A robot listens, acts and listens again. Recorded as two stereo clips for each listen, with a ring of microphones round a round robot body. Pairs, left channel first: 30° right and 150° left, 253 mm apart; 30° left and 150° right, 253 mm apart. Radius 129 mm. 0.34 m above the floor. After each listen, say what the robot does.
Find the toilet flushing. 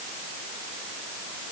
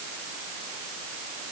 Keep listening.
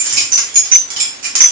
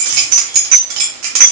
Keep listening.
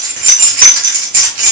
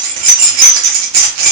I can't make out a toilet flushing, only keys jangling.